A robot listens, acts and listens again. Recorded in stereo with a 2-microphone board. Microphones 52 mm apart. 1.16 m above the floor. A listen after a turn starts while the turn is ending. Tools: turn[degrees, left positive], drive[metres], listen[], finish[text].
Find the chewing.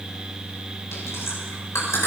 Action: turn[90]
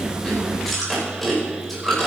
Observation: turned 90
Action: finish[Facing the chewing.]